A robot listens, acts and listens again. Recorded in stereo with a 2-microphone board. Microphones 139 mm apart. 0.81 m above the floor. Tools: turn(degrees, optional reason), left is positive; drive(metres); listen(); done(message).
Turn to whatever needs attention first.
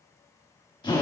listen()
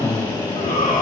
turn(degrees=70, reason="The shout: about 70° left or 110° left.")
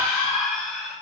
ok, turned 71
done("Facing the shout, 2 to 4 m away.")